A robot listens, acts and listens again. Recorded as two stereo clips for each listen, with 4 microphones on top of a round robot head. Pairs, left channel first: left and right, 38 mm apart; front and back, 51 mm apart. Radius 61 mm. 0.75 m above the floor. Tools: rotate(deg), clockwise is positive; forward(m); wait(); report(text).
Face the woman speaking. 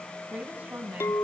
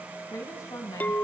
rotate(30)
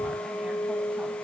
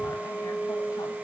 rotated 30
wait()
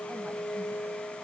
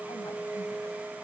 wait()
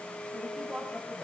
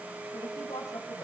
report("Found it: a woman speaking, straight ahead.")